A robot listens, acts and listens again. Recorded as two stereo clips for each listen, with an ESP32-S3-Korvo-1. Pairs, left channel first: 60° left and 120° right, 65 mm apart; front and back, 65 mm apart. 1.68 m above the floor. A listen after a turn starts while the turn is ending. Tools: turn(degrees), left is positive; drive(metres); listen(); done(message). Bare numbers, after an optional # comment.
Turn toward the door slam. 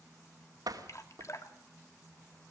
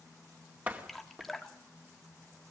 # The door slam: 115° right.
turn(-115)
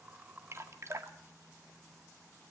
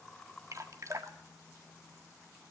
done("I heard a door slam from this way, but can't make it out now.")